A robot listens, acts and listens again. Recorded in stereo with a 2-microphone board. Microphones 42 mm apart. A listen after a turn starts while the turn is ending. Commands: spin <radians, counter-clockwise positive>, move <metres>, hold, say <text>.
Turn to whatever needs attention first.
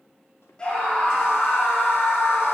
spin 0.44
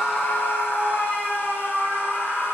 spin 2.27
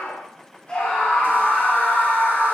spin 0.35
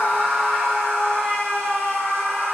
say Facing the scream.